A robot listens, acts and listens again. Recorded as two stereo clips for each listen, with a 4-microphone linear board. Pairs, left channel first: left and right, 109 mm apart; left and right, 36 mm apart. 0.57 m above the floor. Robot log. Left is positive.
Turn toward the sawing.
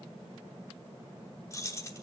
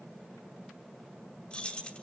cmd idle
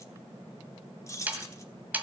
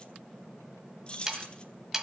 cmd yaw -30
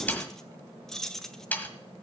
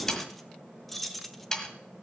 note: So it is at 15° left.
cmd yaw +15
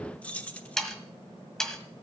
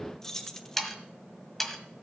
end: Found it: sawing, straight ahead.